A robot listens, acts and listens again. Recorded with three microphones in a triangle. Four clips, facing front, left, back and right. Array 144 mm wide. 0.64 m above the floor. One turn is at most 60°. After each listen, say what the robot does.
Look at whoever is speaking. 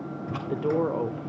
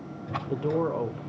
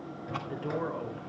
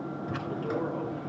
Turn 30° left.
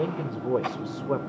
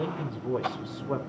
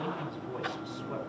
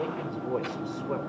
Turn 10° right.
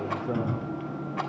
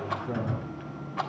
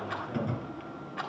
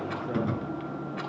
Keep listening.
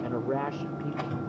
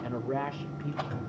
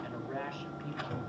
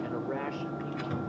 Found it: a man speaking, straight ahead.